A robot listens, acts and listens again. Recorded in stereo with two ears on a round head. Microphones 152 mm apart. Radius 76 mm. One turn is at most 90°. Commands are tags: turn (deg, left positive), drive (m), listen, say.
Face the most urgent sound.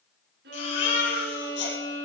<turn deg="90"/>
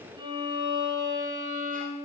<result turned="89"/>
<listen/>
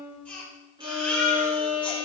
<turn deg="10"/>
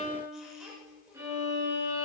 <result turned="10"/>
<listen/>
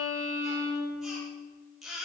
<say>Found it: a baby crying, straight ahead.</say>